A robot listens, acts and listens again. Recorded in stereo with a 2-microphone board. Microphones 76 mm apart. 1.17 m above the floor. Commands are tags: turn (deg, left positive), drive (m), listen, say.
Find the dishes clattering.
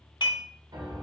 <turn deg="65"/>
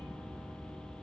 <listen/>
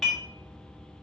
<say>Found it: dishes clattering, straight ahead.</say>